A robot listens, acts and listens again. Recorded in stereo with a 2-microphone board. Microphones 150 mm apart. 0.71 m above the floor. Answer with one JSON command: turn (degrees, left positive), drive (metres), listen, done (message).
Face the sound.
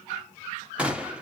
{"turn": -30}
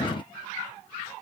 {"listen": true}
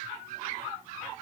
{"done": "I heard a gunshot, but can't make it out now. It was about 20° left or 140° right."}